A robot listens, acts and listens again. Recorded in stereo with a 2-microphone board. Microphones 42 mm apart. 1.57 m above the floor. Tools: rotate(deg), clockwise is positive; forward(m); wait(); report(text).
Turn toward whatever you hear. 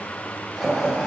rotate(-30)
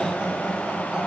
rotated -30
rotate(15)
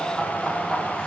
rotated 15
rotate(-10)
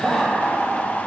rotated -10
rotate(-15)
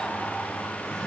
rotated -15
wait()
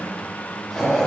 rotate(-15)
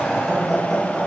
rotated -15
report("Found it: laughter, straight ahead.")